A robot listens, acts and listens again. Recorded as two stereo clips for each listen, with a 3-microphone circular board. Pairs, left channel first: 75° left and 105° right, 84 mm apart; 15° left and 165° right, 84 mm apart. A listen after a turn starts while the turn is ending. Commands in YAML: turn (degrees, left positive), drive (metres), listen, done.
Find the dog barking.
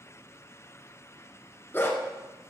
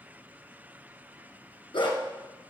turn: 15
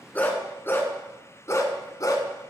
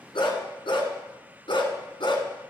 turn: 30
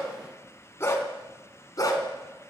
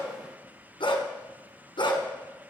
turn: 30
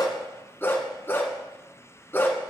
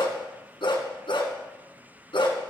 turn: 10
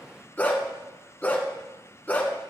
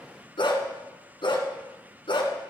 done: "Found it: a dog barking, straight ahead, 1 to 2 m away."